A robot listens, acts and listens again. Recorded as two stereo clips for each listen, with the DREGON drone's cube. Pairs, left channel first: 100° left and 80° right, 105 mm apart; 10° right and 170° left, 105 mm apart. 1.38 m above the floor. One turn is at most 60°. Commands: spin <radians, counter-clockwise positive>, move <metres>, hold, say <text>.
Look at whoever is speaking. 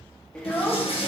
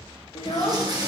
spin 0.35
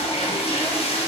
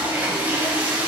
hold
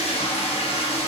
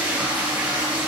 hold
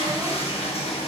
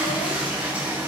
say Facing where the child speaking came from. I can't hear it now.